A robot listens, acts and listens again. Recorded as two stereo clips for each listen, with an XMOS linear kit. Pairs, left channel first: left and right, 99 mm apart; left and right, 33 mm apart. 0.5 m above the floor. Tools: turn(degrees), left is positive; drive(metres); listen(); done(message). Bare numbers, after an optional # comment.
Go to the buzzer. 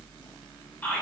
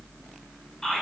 listen()
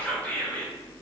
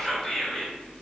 listen()
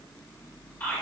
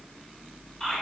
done("I can't make out a buzzer to turn to.")